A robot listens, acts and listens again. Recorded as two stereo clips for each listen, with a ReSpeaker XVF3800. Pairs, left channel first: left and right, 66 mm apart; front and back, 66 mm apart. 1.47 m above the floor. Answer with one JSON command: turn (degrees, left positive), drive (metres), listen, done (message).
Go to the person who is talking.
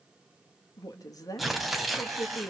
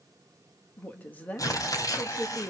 {"turn": 65}
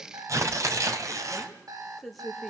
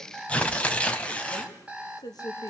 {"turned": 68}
{"drive": 1.0}
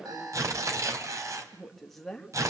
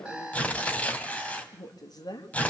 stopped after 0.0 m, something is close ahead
{"done": "Something is in my way. I am facing the woman speaking but have not reached it."}